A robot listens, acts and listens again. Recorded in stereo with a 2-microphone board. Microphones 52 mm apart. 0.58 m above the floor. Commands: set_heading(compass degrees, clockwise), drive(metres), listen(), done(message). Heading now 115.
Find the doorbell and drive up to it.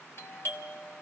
set_heading(60)
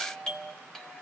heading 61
set_heading(51)
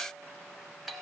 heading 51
drive(1.0)
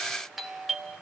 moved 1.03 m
drive(1.0)
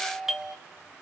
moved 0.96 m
set_heading(66)
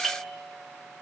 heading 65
drive(1.0)
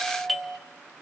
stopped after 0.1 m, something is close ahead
done("Arrived at the doorbell, straight ahead.")